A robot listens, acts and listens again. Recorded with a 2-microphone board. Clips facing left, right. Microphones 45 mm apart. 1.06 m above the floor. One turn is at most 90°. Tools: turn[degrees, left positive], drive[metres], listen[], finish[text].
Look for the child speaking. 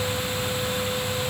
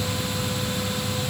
Action: listen[]
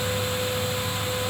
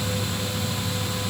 Action: listen[]
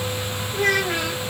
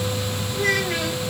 Thought: The child speaking: about 70° left or 110° left.
Action: turn[70]
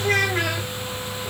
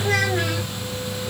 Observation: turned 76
Thought: So it is at 55° left.
Action: turn[55]
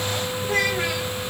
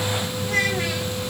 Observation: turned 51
Thought: The child speaking is now 20° left.
Action: turn[20]
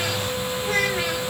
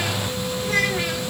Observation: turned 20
Action: finish[Found it: a child speaking, straight ahead.]